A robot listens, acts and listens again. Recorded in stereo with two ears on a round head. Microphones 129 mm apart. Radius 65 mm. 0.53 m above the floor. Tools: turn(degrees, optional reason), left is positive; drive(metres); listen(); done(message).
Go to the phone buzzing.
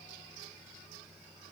listen()
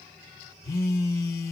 turn(degrees=25, reason="The phone buzzing: about 25° left or 155° left.")
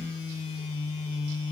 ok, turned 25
turn(degrees=125, reason="So it is at 125° left.")
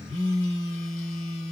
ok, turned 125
turn(degrees=25, reason="The phone buzzing is now 25° left.")
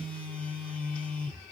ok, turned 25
drive(metres=1.0)
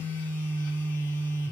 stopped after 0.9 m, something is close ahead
turn(degrees=15, reason="The phone buzzing is now 15° left.")
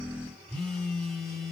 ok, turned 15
done("I am next to the phone buzzing.")